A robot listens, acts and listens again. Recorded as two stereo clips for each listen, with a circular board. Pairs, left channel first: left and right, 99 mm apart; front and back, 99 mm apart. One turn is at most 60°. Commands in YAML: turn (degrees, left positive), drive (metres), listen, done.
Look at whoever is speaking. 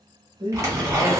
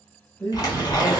turn: -60
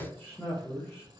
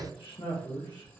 turn: 30
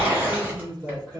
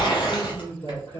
done: "Facing the man speaking, 1 to 2 m away."